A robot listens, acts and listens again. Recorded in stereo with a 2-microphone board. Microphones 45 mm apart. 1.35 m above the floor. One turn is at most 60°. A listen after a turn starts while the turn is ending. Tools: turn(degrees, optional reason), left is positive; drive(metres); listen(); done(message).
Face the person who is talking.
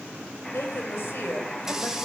turn(degrees=55, reason="The woman speaking: about 55° left or 125° left.")
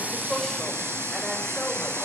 listen()
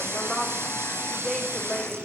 done("Found it: a woman speaking, straight ahead, over 4 m away.")